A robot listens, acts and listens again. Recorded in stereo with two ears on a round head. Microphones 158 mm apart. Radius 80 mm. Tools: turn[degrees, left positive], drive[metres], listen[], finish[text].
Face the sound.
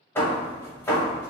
Action: turn[30]
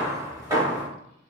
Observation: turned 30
Thought: So it is at 20° right.
Action: turn[-20]
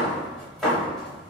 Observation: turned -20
Action: finish[Found it: hammering, straight ahead.]